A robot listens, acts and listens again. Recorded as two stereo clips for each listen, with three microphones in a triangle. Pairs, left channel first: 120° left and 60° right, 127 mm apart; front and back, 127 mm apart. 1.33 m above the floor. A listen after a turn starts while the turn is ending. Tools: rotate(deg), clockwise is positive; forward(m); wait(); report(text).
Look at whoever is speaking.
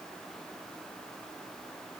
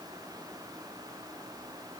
wait()
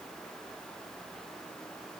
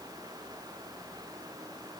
wait()
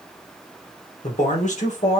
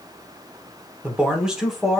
rotate(-90)
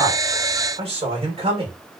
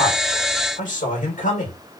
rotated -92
rotate(15)
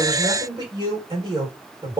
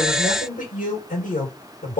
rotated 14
report("Found it: a man speaking, straight ahead.")